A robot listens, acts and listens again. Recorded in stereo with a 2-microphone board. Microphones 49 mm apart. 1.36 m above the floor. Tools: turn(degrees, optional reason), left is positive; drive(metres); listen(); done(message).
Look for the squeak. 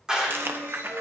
turn(degrees=-70, reason="The squeak: about 70° right or 110° right.")
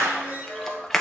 turn(degrees=-30, reason="So it is at 30° right.")
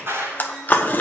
listen()
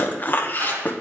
listen()
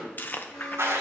done("I heard a squeak from this way, but can't make it out now.")